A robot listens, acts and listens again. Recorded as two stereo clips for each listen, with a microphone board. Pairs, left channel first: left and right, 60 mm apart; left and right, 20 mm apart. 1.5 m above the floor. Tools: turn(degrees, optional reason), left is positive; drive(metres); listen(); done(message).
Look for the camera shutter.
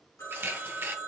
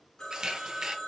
turn(degrees=-35, reason="The camera shutter: about 35° right or 145° right.")
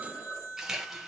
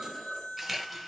done("Facing the camera shutter.")